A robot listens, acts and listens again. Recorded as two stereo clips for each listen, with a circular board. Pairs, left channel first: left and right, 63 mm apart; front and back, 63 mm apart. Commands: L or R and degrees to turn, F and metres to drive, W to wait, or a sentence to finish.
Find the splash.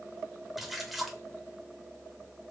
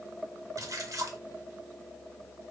L180
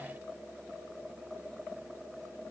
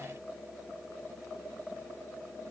I heard a splash from this way, but can't make it out now.